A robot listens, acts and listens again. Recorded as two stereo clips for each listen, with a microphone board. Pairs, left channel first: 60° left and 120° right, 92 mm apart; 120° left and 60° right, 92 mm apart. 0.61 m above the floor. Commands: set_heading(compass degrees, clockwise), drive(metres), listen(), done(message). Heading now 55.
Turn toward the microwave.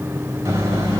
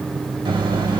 set_heading(125)
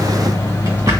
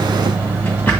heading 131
done("Facing the microwave, under 1 m away.")